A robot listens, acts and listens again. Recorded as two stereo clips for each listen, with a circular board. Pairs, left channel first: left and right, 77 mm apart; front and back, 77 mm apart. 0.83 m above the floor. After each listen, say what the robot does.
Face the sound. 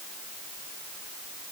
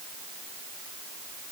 Keep listening.
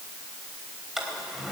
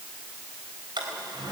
Turn 175° right.
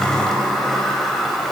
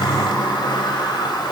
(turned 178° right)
Found it: a sliding door, straight ahead.